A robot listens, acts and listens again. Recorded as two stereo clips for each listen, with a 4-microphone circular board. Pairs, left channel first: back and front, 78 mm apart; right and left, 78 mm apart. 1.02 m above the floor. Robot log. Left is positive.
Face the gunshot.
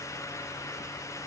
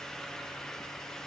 cmd idle
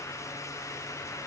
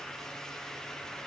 cmd idle
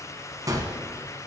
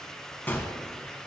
note: The gunshot: 25° right.
cmd yaw -25
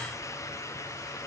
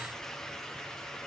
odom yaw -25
end: I heard a gunshot from this way, but can't make it out now.